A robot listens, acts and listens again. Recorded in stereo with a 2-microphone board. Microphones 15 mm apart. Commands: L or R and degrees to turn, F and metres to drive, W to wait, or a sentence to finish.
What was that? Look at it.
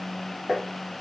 R50
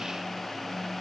W
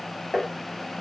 Found it: tapping, straight ahead.